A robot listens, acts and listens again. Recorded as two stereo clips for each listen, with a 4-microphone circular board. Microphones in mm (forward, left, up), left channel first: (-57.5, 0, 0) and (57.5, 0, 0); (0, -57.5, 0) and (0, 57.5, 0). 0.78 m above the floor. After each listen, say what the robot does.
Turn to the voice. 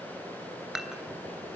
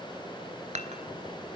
Keep listening.
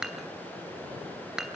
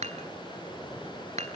Keep listening.
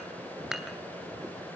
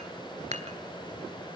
I can't make out anyone speaking to turn to.